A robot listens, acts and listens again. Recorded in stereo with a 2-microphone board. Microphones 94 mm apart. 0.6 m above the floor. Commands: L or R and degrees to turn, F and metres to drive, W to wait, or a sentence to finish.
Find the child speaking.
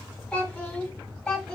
L30
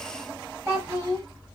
R30
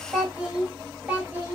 R20
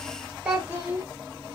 R20
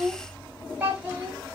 R10
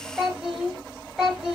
Found it: a child speaking, straight ahead, 1 to 2 m away.